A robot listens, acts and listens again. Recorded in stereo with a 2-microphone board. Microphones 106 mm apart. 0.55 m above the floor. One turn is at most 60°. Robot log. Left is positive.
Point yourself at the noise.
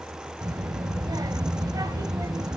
note: The child speaking: about 35° right or 145° right.
cmd yaw -35
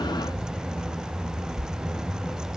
end: Found it: a child speaking, straight ahead, 1 to 2 m away.